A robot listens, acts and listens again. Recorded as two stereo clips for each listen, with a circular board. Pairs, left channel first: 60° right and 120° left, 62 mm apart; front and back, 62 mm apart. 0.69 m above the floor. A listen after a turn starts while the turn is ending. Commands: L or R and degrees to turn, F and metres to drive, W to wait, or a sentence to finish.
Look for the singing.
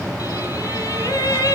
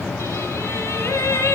R40
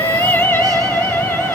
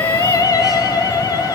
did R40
Found it: singing, straight ahead, 2 to 4 m away.